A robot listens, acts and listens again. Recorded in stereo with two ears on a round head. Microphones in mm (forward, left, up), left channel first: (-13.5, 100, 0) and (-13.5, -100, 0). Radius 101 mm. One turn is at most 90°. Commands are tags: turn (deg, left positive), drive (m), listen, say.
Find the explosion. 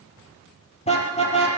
<listen/>
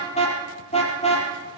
<listen/>
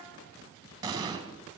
<turn deg="-15"/>
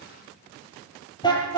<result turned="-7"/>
<listen/>
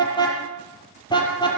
<say>I heard an explosion, but can't make it out now. It was about 10° right or 155° right.</say>